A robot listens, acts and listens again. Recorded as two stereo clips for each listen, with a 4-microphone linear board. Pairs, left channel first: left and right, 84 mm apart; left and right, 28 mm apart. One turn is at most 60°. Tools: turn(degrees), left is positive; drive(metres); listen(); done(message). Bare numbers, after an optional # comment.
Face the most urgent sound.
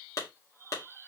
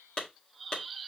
listen()
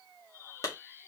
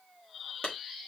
listen()
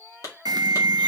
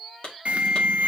# The alarm: about 50° right or 130° right.
turn(-50)
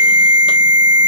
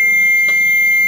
# So it is at 65° right.
turn(-60)
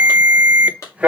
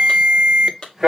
# The alarm is now 15° right.
turn(-15)
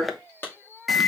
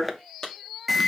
done("Found it: an alarm, straight ahead.")